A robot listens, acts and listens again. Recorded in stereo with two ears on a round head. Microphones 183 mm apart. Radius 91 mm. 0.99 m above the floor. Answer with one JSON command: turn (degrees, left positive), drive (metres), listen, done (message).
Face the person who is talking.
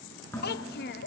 {"turn": 50}
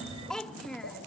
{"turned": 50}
{"done": "Found it: a child speaking, straight ahead."}